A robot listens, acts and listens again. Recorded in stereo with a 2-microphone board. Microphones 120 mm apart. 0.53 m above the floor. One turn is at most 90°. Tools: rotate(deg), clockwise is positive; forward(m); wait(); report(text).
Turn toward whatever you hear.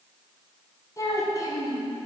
rotate(-30)
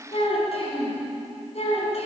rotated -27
rotate(-90)
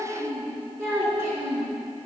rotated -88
report("Facing the child speaking, 2 to 4 m away.")